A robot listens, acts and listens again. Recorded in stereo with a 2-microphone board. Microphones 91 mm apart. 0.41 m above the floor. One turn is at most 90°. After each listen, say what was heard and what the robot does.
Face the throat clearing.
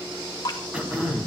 The throat clearing: about 15° right or 165° right. Turn 15° right.
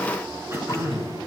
So it is at 150° right. Turn 90° right.
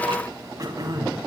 The throat clearing is now 50° right. Turn 50° right.
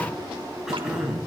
Facing the throat clearing, 2 to 4 m away.